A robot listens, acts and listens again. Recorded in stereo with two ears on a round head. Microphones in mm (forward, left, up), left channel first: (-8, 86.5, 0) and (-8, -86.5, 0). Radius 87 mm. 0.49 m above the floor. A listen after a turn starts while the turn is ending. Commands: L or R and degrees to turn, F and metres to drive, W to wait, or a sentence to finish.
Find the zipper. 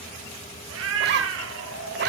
R55
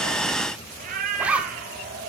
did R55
Found it: a zipper, straight ahead.